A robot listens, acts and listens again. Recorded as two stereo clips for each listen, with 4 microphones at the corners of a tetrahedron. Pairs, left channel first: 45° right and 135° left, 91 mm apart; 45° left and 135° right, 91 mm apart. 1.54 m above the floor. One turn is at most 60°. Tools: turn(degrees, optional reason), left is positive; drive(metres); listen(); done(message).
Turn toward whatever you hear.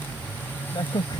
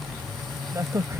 turn(degrees=-60, reason="The crack: 75° right.")
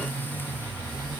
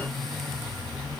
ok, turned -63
turn(degrees=-15, reason="Nothing new. It was at 15° right.")
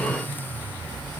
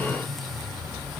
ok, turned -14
done("Facing where the crack came from. I can't hear it now.")